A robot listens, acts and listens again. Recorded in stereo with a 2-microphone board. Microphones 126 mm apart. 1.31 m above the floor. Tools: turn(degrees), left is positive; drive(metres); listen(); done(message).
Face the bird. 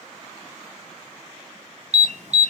listen()
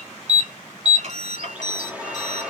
turn(degrees=-30)
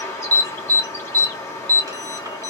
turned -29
turn(degrees=20)
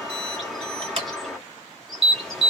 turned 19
done("Facing the bird.")